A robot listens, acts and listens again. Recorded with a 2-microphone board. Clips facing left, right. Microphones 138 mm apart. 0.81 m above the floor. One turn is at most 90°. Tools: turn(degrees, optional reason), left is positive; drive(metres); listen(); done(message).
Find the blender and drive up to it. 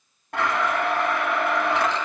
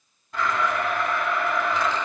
turn(degrees=70, reason="The blender: about 70° left or 110° left.")
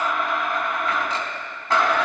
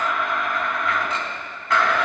turn(degrees=35, reason="So it is at 35° left.")
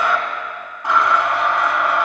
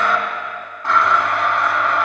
turn(degrees=15, reason="The blender is now 15° left.")
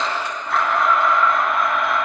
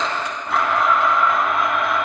drive(metres=1.0)
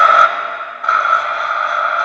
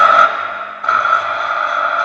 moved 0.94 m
drive(metres=1.0)
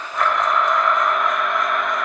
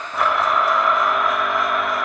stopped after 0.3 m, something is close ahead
done("I am next to the blender.")